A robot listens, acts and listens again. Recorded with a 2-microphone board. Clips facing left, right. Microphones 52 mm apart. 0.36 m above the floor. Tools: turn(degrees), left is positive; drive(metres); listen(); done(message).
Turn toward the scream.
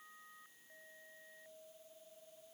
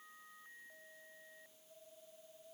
listen()
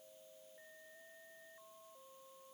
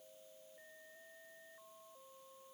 listen()
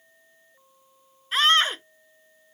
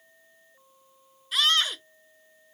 turn(degrees=35)
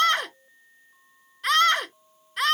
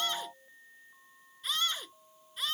turn(degrees=105)
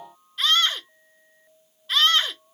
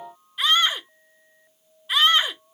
turn(degrees=-15)
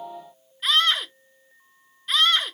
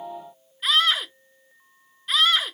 done("Facing the scream.")